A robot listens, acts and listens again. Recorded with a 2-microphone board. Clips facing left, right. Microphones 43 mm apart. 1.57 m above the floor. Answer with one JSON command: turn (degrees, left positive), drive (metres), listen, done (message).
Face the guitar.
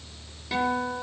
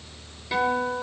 {"turn": -30}
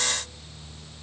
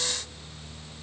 {"listen": true}
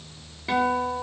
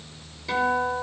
{"turn": 25}
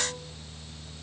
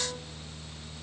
{"listen": true}
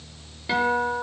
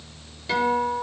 {"turn": 15}
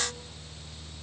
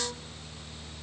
{"listen": true}
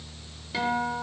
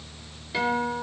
{"done": "Facing the guitar."}